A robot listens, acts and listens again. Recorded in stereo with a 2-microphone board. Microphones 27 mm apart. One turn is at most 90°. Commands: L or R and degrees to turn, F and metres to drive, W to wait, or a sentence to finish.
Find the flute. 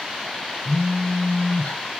W
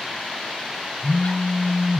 W
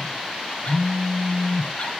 I can't make out a flute, only a phone buzzing.